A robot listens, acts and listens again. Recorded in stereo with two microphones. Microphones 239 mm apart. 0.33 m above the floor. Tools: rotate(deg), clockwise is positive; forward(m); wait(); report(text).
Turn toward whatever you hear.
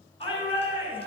rotate(-25)
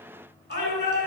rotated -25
rotate(-130)
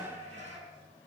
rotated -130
rotate(30)
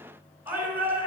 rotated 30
rotate(10)
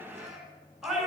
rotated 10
report("Found it: a shout, straight ahead, over 4 m away.")